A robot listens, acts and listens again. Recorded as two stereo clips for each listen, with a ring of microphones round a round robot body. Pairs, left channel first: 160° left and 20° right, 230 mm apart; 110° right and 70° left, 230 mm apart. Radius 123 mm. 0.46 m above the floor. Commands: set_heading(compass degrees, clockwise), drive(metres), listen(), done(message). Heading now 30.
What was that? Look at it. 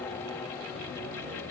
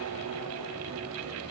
listen()
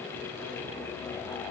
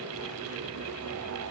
listen()
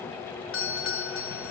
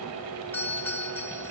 set_heading(220)
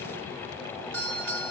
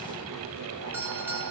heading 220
set_heading(235)
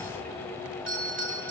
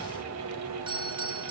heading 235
done("Found it: a doorbell, straight ahead.")